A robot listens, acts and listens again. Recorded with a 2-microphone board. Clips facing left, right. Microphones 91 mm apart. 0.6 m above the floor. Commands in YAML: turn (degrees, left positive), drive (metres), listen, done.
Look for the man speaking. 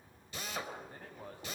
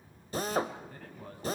turn: 25
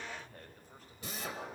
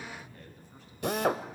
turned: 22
turn: 140
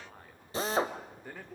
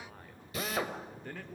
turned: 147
turn: 15
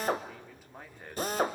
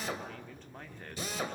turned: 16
turn: 10
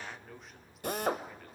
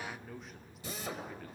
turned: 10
done: "Found it: a man speaking, straight ahead."